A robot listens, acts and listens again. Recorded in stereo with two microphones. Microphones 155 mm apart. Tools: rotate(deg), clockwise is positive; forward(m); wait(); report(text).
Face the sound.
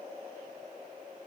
wait()
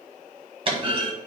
rotate(35)
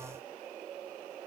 wait()
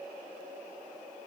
report("I heard a clunk, but can't make it out now. It was about straight ahead or 110° right.")